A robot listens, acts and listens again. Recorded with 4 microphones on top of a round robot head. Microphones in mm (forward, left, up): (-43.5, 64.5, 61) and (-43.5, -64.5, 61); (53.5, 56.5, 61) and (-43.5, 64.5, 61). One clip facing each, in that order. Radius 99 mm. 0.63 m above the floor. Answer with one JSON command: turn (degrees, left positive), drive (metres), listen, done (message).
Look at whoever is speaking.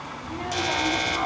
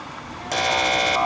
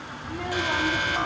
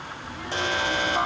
{"turn": 15}
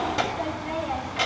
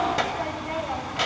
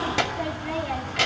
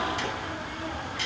{"done": "Found it: a child speaking, straight ahead."}